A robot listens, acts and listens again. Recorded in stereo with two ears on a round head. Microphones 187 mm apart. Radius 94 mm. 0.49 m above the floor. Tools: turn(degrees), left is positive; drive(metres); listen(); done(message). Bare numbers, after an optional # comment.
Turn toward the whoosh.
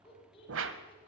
# The whoosh: about 65° right or 115° right.
turn(-65)
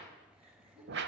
# So it is at 55° right.
turn(-55)
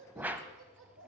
# The whoosh is now 10° right.
turn(-10)
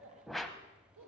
done("Facing the whoosh.")